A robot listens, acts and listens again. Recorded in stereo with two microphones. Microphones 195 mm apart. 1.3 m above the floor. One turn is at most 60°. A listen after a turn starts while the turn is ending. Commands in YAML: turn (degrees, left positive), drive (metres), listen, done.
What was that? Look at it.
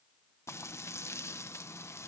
turn: 30
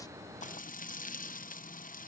turn: 60
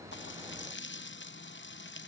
turn: 60
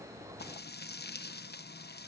turn: 60
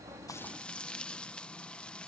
done: "Found it: frying, straight ahead."